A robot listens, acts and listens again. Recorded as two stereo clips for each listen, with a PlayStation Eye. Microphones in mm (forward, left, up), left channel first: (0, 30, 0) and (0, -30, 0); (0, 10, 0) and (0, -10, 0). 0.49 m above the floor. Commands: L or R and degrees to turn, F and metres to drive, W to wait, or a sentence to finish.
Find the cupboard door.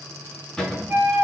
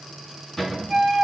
L30
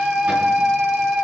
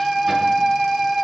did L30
W
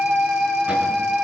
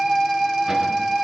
W
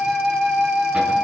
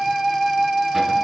I heard a cupboard door, but can't make it out now. It was about 20° right or 140° left.